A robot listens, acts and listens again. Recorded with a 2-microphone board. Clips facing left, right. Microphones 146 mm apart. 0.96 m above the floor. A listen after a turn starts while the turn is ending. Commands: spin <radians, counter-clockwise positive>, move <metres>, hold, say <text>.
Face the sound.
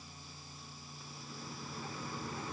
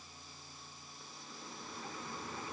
hold
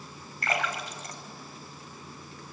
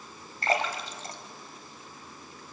spin -0.52
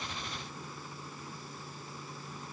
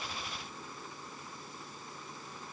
hold
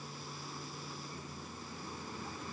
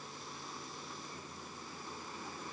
say I heard a splash, but can't make it out now. It was about straight ahead or 120° right.